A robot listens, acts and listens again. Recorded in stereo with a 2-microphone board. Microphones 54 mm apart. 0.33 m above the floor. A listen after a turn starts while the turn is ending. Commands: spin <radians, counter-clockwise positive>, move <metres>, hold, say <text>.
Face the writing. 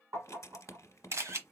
spin 1.22
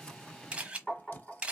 spin 0.61
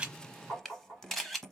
say Found it: writing, straight ahead, under 1 m away.